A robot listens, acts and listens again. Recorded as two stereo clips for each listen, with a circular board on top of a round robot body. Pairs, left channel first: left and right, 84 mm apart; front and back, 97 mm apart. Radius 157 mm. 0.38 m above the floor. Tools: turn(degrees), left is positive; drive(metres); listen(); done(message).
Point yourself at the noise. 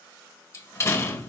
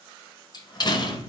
turn(degrees=40)
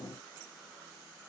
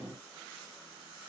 done("Facing where the door slam came from. I can't hear it now.")